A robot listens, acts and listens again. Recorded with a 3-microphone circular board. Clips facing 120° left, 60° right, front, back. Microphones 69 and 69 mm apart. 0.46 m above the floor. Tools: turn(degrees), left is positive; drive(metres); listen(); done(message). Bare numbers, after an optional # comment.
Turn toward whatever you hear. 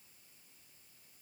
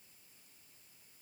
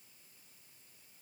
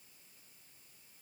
listen()
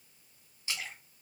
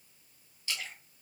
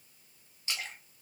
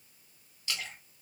# The splash: 50° left.
turn(50)
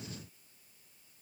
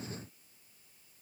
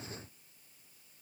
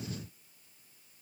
done("Facing where the splash came from. I can't hear it now.")